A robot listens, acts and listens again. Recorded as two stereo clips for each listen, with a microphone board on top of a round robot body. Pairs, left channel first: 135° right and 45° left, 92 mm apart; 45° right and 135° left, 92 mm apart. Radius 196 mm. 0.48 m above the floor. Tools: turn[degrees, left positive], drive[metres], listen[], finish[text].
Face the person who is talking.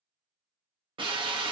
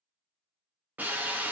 Action: listen[]
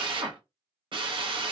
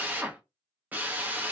Action: listen[]
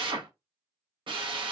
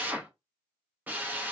Action: finish[I can't make out anyone speaking to turn to.]